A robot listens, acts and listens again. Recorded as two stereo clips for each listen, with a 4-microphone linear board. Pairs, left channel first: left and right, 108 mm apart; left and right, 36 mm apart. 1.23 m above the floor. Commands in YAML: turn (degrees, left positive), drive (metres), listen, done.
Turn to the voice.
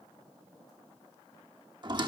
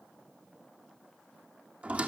listen: true
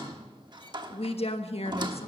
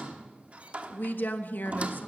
turn: 65
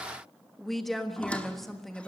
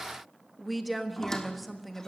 done: "Facing the woman speaking."